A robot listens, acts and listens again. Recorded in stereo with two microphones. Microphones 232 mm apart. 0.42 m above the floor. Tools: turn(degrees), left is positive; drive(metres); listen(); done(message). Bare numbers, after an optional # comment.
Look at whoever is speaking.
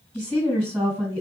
turn(-30)
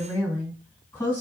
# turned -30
# So it is at 20° left.
turn(20)
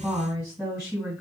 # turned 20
done("Found it: a woman speaking, straight ahead.")